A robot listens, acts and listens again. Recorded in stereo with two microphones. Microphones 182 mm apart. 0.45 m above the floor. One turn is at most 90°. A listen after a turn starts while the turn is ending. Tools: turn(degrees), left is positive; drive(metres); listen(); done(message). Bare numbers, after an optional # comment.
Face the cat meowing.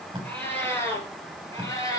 # The cat meowing: about 20° left or 160° left.
turn(20)
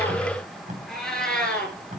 turn(30)
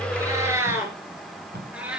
done("Found it: a cat meowing, straight ahead, 2 to 4 m away.")